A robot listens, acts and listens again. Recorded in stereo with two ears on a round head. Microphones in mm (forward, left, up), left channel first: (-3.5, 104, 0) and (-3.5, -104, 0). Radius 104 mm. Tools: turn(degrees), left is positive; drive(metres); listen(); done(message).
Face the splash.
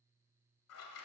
listen()
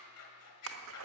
turn(degrees=-65)
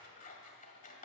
listen()
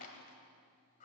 done("I heard a splash, but can't make it out now. It was about straight ahead or 50° right.")